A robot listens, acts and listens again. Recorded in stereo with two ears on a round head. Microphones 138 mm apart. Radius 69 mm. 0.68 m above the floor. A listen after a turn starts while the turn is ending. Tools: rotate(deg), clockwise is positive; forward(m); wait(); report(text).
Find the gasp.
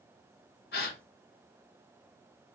rotate(-70)
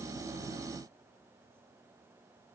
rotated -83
wait()
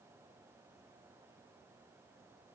report("I heard a gasp, but can't make it out now. It was about 10° right or 25° left.")